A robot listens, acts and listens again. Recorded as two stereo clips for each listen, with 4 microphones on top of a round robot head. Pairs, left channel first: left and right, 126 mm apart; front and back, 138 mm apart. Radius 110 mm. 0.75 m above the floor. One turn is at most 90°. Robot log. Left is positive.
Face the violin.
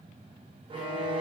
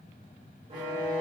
note: The violin: 135° right.
cmd yaw -90
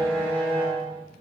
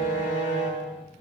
note: The violin is now 20° right.
cmd yaw -20
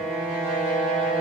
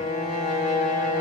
note: The violin is now 10° right.
cmd yaw -10
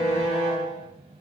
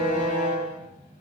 end: Facing the violin, 1 to 2 m away.